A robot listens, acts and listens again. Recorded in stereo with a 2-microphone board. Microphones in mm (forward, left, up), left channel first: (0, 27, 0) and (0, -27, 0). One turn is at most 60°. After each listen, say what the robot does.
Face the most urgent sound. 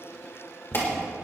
Turn 45° left.
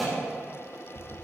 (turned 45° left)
Keep listening.
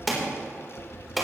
Facing the alarm.